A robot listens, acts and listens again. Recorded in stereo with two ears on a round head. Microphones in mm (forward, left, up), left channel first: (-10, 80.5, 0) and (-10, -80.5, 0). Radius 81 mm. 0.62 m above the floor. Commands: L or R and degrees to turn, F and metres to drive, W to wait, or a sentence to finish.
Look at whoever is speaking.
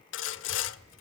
R35
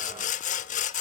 W
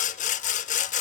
W
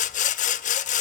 I heard a child speaking, but can't make it out now. It was about straight ahead or 110° right.